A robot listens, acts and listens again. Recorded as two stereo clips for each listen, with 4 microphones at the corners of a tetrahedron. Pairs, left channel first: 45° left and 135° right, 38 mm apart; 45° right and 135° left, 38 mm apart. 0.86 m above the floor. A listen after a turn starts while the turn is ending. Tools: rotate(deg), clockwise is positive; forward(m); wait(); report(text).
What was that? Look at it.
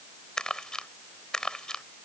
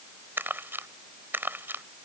rotate(-115)
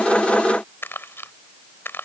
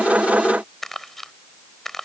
rotate(-35)
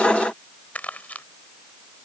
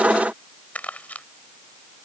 report("Found it: crumpling, straight ahead.")